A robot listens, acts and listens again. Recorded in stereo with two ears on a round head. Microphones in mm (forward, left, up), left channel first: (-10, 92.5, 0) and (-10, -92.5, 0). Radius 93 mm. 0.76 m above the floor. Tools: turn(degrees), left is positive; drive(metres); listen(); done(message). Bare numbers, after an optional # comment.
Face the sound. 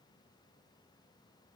listen()
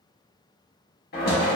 # The knocking: about 50° left or 130° left.
turn(50)
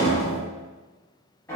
# So it is at 10° left.
turn(10)
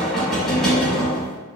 done("Found it: knocking, straight ahead, under 1 m away.")